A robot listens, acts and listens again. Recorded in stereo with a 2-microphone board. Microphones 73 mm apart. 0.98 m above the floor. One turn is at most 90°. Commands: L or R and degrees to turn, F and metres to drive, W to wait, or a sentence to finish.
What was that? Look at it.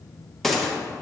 L30
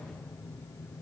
W
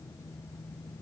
I heard a gunshot, but can't make it out now. It was about 30° right or 150° left.